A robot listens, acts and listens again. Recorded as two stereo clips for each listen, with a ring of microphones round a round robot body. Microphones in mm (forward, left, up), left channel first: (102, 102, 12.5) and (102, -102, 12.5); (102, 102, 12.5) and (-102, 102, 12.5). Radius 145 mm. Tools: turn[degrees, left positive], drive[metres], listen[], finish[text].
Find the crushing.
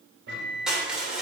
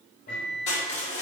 Action: finish[Found it: crushing, straight ahead, 2 to 4 m away.]